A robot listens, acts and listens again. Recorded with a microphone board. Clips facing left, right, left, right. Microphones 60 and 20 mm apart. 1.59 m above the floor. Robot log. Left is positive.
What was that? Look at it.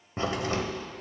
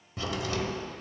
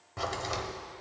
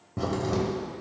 note: The crack: about 35° left or 145° left.
cmd yaw +35
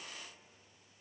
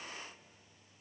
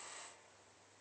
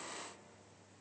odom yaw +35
cmd idle
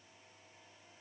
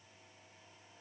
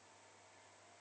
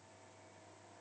end: I heard a crack, but can't make it out now. It was about straight ahead or 110° left.